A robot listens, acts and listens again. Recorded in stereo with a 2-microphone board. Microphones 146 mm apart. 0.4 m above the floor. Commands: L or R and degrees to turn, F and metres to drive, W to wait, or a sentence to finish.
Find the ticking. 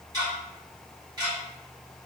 R25
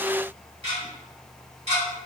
R125
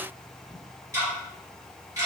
R25
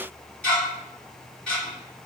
L10
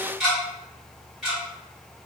Found it: ticking, straight ahead, 1 to 2 m away.